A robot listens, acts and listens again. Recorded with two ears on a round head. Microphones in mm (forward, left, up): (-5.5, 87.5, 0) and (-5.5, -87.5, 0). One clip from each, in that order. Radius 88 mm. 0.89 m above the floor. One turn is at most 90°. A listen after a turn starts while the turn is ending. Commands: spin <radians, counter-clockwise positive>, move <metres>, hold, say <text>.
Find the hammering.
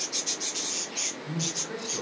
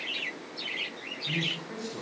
hold
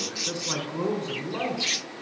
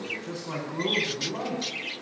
hold
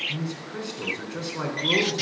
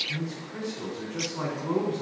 say I can't make out hammering to turn to.